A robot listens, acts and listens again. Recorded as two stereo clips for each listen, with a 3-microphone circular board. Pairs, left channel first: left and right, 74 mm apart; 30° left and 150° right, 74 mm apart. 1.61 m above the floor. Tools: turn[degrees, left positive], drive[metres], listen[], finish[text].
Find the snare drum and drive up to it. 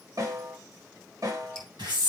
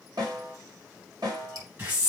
Thought: The snare drum: 120° right.
Action: turn[-120]
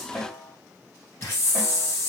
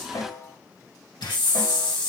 Action: drive[1.0]
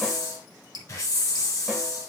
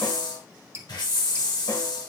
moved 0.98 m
Action: listen[]
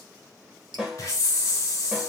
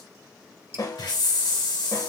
Action: drive[1.0]
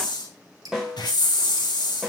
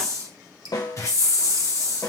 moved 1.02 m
Action: drive[1.0]
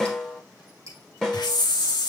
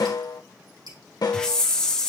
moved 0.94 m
Thought: The snare drum is now 10° left.
Action: turn[10]
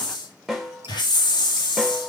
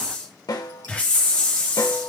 Action: drive[1.0]
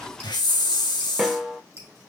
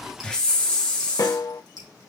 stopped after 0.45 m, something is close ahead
Action: finish[Arrived at the snare drum, straight ahead.]